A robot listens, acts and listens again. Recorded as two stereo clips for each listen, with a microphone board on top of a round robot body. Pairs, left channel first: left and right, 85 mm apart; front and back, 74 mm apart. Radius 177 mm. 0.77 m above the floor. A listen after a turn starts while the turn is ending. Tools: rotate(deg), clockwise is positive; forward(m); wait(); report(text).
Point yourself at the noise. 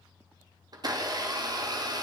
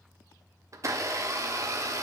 rotate(135)
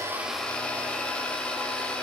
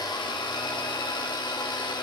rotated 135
rotate(-10)
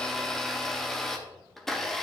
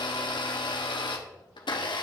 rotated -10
report("Facing the blender.")